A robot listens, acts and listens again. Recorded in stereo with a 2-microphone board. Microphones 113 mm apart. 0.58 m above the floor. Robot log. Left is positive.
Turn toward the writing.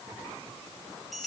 cmd idle
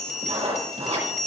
note: The writing: about 65° right or 115° right.
cmd yaw -65
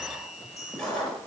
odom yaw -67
end: Found it: writing, straight ahead, over 4 m away.